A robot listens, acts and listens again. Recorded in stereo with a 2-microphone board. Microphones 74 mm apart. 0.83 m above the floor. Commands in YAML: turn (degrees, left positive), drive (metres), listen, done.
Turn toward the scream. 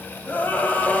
turn: 20
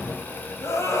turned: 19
turn: 140
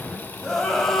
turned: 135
done: "Facing the scream."